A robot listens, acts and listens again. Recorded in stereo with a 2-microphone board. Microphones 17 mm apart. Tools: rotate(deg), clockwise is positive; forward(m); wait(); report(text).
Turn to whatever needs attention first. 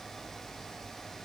wait()
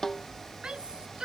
rotate(90)
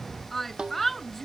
rotate(-15)
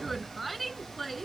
report("Facing the shout.")